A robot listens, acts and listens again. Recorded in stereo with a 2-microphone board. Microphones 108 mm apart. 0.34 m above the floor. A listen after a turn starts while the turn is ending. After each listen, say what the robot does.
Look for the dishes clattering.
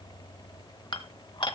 Turn 50° left.
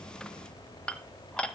Turn 10° left.
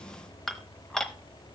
Facing the dishes clattering.